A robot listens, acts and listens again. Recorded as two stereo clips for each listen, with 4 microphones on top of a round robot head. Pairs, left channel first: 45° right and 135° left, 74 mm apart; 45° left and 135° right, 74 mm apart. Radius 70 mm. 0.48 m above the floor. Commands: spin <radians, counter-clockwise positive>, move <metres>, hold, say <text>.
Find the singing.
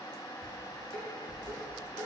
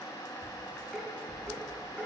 hold
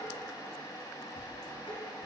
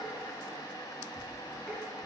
hold
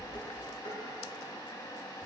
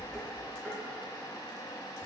say I can't make out singing, only dishes clattering.